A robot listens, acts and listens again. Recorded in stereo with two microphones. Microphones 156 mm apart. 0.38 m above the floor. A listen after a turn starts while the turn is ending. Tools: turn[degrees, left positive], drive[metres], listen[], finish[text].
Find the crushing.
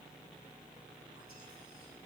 Action: listen[]
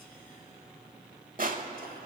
Thought: The crushing: about 60° right or 120° right.
Action: turn[-60]
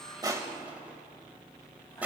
Thought: So it is at 10° right.
Action: turn[-10]
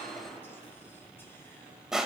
Action: finish[Found it: crushing, straight ahead.]